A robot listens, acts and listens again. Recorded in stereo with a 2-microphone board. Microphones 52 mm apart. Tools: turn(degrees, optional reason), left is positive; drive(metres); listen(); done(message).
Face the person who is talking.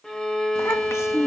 turn(degrees=65, reason="The child speaking: about 65° left or 115° left.")
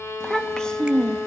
turn(degrees=15, reason="So it is at 15° left.")
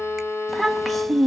done("Facing the child speaking.")